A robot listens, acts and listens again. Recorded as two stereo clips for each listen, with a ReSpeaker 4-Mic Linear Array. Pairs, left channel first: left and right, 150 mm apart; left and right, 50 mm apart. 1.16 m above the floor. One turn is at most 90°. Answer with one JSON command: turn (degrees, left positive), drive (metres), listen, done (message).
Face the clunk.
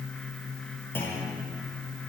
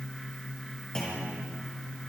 {"turn": 15}
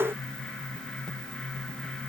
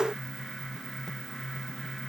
{"listen": true}
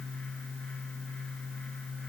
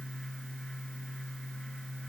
{"done": "I heard a clunk, but can't make it out now. It was about straight ahead or 150° left."}